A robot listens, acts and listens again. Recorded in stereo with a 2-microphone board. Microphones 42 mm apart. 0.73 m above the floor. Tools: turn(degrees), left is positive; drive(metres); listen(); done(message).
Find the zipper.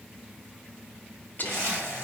turn(degrees=-70)
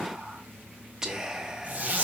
turn(degrees=-35)
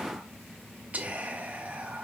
listen()
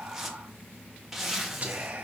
turn(degrees=-10)
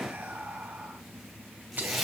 done("Facing the zipper, 1 to 2 m away.")